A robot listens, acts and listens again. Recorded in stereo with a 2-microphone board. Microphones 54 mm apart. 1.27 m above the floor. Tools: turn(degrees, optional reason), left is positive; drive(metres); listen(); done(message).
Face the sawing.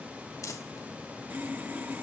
turn(degrees=-35, reason="The sawing: about 35° right or 145° right.")
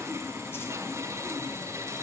turn(degrees=-110, reason="So it is at 110° right.")
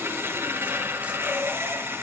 turn(degrees=-40, reason="The sawing is now 40° right.")
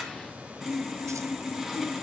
done("Facing the sawing.")